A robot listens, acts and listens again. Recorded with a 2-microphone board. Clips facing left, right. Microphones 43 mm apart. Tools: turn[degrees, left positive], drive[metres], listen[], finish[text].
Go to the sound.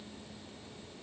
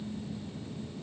Action: listen[]
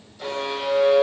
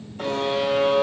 Thought: The buzzer: about 45° right or 135° right.
Action: turn[-45]
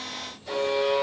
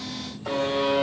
Thought: So it is at 90° right.
Action: turn[-90]
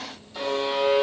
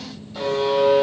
Action: drive[1.0]
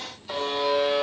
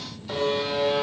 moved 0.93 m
Action: drive[1.0]
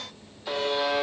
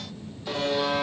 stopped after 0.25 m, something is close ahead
Thought: The buzzer is now 10° left.
Action: turn[10]
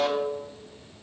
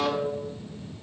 Action: finish[Arrived at the buzzer, straight ahead.]